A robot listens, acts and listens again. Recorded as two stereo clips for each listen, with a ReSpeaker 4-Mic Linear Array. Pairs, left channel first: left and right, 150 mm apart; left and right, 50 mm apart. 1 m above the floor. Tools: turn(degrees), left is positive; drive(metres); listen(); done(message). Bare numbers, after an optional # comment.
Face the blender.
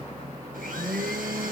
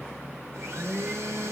# The blender: about 70° right or 110° right.
turn(-70)
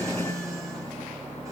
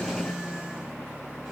# So it is at 20° right.
turn(-20)
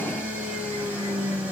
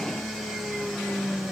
# The blender is now 10° right.
turn(-10)
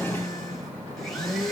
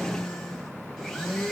done("Facing the blender.")